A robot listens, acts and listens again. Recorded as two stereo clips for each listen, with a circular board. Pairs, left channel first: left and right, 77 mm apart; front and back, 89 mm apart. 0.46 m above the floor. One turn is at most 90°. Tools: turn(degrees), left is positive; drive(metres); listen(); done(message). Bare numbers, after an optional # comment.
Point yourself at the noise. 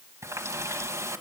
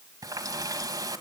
# The running tap: 135° right.
turn(-90)
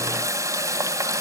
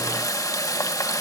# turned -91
# The running tap is now 45° right.
turn(-45)
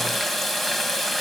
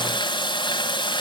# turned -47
done("Found it: a running tap, straight ahead, 1 to 2 m away.")